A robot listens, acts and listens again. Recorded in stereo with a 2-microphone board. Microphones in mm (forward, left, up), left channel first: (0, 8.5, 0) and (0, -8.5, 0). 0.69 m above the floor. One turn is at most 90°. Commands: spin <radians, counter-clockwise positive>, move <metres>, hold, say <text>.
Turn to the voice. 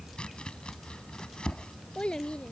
spin 1.57
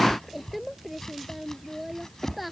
say Found it: a child speaking, straight ahead.